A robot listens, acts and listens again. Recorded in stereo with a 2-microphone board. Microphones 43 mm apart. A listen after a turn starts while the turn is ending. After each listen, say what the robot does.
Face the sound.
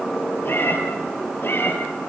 Turn 55° left.
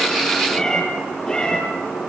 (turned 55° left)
Turn 15° left.
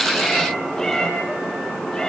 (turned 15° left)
Turn 10° left.
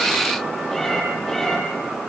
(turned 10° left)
Facing the cat meowing, over 4 m away.